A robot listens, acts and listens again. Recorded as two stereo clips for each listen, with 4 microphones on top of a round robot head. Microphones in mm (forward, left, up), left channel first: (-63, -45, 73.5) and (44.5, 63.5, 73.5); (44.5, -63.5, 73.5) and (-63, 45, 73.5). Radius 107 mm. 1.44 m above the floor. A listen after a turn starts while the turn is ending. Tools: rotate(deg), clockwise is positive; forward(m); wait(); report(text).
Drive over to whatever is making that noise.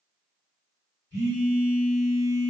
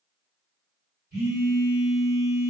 rotate(-160)
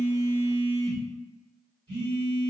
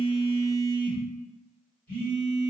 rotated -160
rotate(15)
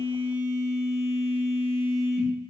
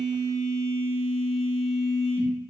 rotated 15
forward(1.0)
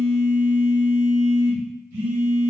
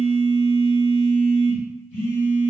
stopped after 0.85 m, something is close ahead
report("I am next to the phone buzzing.")